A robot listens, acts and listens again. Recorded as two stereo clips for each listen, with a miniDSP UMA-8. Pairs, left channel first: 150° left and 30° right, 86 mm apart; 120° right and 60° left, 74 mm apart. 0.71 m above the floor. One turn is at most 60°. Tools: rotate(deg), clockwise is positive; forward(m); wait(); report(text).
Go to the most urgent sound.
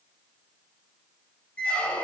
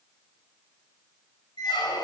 wait()
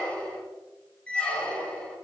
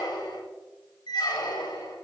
wait()
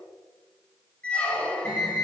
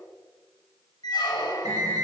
rotate(-60)
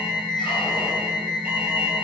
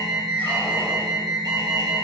rotate(-40)
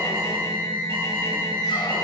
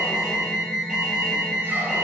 rotate(15)
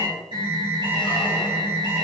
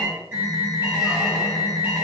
forward(1.0)
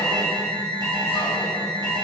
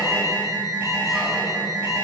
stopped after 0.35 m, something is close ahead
report("Something is in my way. I am facing the alarm but have not reached it.")